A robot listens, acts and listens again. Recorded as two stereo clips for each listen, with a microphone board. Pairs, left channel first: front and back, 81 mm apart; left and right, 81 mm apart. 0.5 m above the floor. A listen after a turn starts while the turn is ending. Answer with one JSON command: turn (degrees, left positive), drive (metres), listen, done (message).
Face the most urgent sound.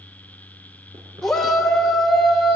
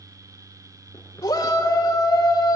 {"turn": 80}
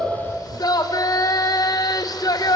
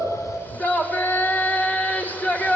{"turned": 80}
{"turn": 25}
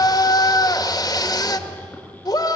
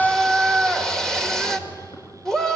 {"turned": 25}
{"done": "Found it: a shout, straight ahead, 1 to 2 m away."}